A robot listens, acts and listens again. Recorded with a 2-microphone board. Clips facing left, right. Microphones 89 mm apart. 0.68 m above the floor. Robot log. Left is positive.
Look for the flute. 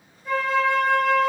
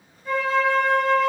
cmd yaw +30
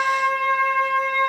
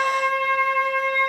note: So it is at 150° left.
cmd yaw +150
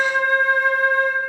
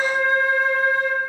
note: The flute is now 65° left.
cmd yaw +65
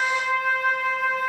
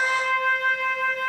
note: The flute is now 10° left.
cmd yaw +10
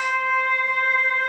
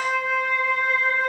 end: Facing the flute, 2 to 4 m away.